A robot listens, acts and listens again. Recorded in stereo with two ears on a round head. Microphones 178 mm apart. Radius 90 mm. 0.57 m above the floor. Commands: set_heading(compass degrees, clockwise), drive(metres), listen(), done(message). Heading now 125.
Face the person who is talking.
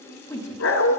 set_heading(95)
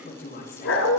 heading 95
set_heading(315)
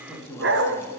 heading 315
set_heading(305)
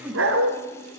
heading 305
done("Facing the woman speaking, 2 to 4 m away.")